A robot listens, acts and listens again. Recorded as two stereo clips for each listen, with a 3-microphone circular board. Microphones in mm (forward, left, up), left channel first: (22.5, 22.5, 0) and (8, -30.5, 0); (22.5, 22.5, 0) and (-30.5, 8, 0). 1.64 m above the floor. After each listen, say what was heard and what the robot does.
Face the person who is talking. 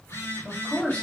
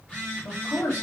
The man speaking: 10° left. Turn 10° left.
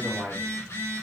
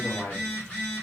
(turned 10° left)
Facing the man speaking.